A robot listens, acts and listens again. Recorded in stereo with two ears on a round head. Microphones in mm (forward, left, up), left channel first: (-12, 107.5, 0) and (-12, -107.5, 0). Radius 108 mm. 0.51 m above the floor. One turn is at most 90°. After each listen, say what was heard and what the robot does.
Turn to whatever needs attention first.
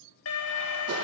The alarm: about 65° left or 115° left. Turn 65° left.
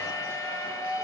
So it is at 15° left. Turn 15° left.
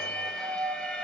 Facing the alarm.